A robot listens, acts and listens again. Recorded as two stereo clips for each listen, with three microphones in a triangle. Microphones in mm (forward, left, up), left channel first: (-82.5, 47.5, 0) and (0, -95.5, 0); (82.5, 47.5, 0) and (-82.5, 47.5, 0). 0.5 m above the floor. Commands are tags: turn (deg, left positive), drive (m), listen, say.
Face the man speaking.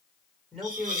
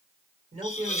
<turn deg="-150"/>
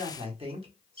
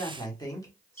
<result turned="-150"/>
<turn deg="-50"/>
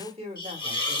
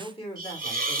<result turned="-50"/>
<turn deg="-40"/>
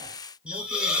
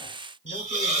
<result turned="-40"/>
<listen/>
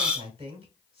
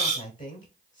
<turn deg="-20"/>
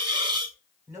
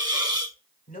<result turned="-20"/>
<say>Facing the man speaking.</say>